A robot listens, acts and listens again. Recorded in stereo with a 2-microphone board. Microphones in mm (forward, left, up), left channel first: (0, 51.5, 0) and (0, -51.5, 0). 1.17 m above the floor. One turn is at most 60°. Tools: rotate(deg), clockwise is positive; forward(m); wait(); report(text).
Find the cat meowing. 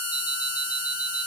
wait()
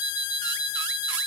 wait()
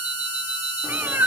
rotate(20)
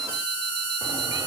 wait()
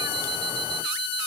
wait()
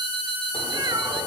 rotate(60)
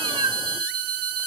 rotate(60)
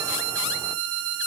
rotate(25)
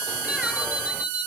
wait()
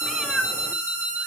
report("Facing the cat meowing, 1 to 2 m away.")